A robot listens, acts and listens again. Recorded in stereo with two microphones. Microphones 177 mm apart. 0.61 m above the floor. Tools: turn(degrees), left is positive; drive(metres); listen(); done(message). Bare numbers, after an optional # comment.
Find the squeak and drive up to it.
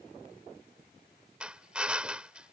listen()
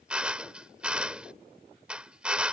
listen()
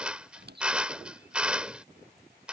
# The squeak: about 70° right or 110° right.
turn(-70)
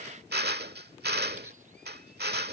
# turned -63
listen()
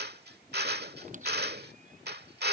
# So it is at 45° right.
turn(-45)
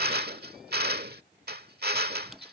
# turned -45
drive(1.0)
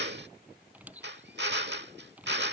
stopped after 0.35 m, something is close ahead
# The squeak is now 10° right.
turn(-10)
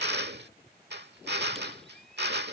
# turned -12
listen()
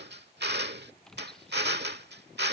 done("Blocked. The squeak is further on, straight ahead.")